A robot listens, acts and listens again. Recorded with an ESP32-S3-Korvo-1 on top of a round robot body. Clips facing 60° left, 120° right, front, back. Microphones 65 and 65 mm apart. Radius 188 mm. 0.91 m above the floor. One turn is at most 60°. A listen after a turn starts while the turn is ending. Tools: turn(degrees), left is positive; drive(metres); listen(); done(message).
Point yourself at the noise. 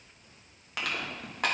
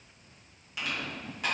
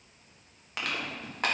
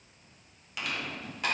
turn(degrees=35)
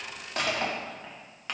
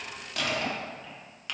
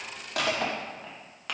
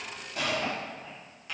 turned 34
done("Facing the crushing.")